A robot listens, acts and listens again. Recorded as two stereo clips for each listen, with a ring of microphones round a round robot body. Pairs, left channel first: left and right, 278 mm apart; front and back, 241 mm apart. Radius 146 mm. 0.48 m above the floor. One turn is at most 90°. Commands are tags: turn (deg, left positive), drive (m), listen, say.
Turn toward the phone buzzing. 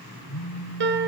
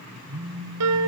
<turn deg="90"/>
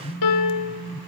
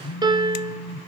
<turn deg="15"/>
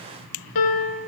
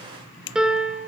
<listen/>
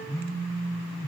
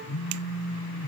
<say>Facing the phone buzzing, 1 to 2 m away.</say>